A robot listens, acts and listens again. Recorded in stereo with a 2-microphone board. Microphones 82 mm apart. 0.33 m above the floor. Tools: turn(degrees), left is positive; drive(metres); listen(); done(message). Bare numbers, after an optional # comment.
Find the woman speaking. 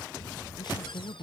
# The woman speaking: about 60° left or 120° left.
turn(60)
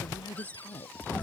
# So it is at 60° left.
turn(60)
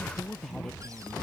done("Facing the woman speaking.")